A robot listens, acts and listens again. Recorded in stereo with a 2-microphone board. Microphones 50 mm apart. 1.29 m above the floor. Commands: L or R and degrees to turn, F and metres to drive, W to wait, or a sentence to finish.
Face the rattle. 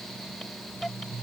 W
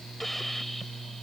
W
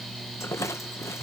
L90
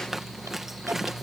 Found it: a rattle, straight ahead.